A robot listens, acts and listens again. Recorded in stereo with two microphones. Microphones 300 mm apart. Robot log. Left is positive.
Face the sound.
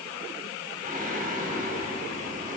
note: The singing: about 30° right or 150° right.
cmd yaw -30
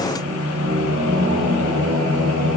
note: So it is at 120° right.
cmd yaw -120
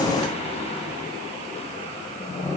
note: The singing is now 20° left.
cmd yaw +20
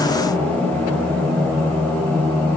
end: Found it: singing, straight ahead, over 4 m away.